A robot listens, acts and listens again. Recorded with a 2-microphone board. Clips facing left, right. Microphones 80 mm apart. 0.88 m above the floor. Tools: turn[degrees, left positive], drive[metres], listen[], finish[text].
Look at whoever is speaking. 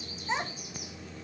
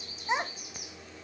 Thought: The child speaking: about 15° right or 165° right.
Action: turn[-15]
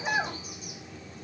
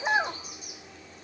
Thought: So it is at 150° right.
Action: turn[-150]
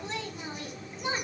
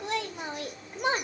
Thought: The child speaking is now 65° right.
Action: turn[-65]
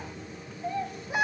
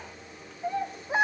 Thought: The child speaking is now 30° right.
Action: turn[-30]
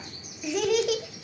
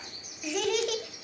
Action: finish[Facing the child speaking, 1 to 2 m away.]